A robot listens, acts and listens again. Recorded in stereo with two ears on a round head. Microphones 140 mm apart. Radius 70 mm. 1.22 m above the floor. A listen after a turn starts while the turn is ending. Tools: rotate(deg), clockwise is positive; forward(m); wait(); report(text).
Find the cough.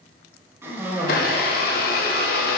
rotate(15)
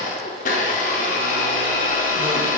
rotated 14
wait()
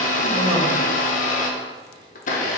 wait()
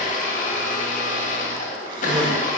rotate(150)
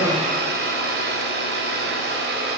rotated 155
wait()
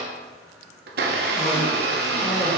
wait()
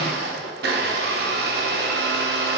report("I heard a cough from this way, but can't make it out now.")